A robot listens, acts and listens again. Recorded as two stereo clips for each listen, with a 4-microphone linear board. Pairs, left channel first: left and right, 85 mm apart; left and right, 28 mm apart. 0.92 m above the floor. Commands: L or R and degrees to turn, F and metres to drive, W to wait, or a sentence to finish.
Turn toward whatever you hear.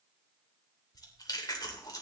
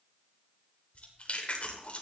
L50
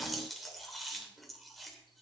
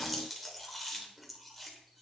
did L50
Facing the chewing.